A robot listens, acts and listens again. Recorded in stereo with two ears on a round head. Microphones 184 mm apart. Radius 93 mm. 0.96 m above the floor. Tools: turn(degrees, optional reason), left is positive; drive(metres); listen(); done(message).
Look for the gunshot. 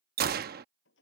turn(degrees=-50, reason="The gunshot: about 50° right or 130° right.")
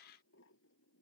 listen()
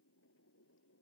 done("I heard a gunshot, but can't make it out now. It was about straight ahead or 80° right.")